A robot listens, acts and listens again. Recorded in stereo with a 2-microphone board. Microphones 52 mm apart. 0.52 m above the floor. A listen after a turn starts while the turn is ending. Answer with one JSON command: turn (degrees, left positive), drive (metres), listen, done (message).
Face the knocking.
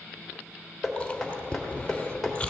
{"turn": 30}
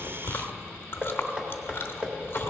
{"turn": -25}
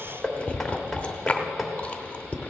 {"done": "Found it: knocking, straight ahead."}